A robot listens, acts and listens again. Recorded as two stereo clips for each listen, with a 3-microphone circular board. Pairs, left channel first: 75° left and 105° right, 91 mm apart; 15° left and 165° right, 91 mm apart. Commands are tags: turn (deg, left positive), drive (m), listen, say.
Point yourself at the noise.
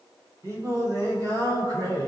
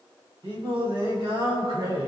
<turn deg="-145"/>
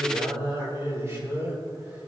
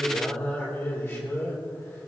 <turn deg="-40"/>
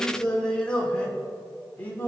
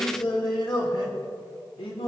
<say>Found it: singing, straight ahead, 2 to 4 m away.</say>